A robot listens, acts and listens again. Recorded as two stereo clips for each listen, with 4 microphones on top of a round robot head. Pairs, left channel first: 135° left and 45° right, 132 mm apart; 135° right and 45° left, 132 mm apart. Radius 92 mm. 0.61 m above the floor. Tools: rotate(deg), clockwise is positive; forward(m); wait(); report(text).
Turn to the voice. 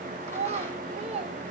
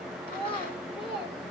rotate(85)
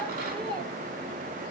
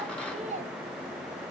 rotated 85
rotate(-10)
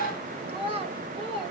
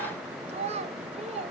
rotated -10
report("Found it: a child speaking, straight ahead, 2 to 4 m away.")